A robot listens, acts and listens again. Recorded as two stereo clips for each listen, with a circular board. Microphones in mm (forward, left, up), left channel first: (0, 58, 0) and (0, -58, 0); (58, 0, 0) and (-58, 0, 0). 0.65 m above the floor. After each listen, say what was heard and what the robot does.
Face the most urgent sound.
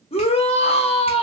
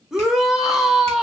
The shout: 95° left. Turn 95° left.
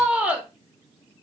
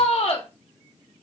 The shout is now 15° right. Turn 15° right.
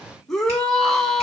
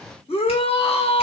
Facing the shout, under 1 m away.